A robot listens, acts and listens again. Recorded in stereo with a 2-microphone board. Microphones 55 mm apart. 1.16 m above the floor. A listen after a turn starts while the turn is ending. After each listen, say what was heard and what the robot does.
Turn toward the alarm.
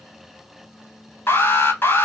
The alarm: about 45° left or 135° left. Turn 45° left.
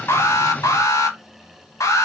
So it is at 85° left. Turn 85° left.
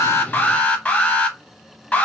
The alarm is now 20° left. Turn 20° left.
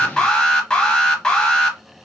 The alarm is now 10° left. Turn 10° left.
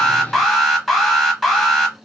Found it: an alarm, straight ahead, under 1 m away.